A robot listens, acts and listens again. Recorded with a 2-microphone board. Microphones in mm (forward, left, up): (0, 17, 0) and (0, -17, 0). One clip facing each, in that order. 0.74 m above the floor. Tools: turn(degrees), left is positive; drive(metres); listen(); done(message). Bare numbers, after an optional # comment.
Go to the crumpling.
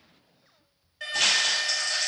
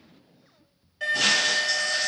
# The crumpling: about 50° left or 130° left.
turn(50)
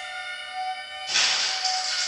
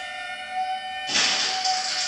drive(1.0)
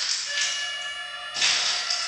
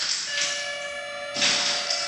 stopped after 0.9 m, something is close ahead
done("Arrived at the crumpling, straight ahead.")